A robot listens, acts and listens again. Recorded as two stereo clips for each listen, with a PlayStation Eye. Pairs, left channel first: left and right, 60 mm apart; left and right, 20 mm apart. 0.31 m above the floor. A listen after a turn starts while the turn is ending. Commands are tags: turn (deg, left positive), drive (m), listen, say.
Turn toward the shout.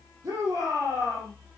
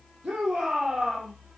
<turn deg="-55"/>
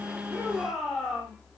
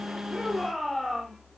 <say>Facing the shout.</say>